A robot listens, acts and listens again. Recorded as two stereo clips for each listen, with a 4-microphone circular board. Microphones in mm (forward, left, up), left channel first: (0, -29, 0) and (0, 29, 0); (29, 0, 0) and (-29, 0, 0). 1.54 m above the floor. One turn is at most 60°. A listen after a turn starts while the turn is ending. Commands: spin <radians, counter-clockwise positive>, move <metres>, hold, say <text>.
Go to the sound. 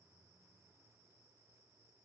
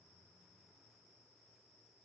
hold
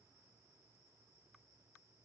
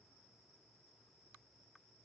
hold
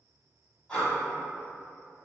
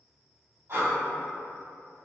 spin -1.05
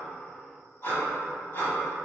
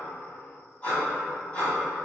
spin -1.05
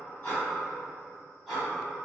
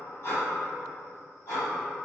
move 1.0
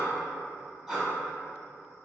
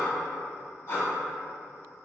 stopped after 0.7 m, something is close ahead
say Arrived at the breathing, straight ahead.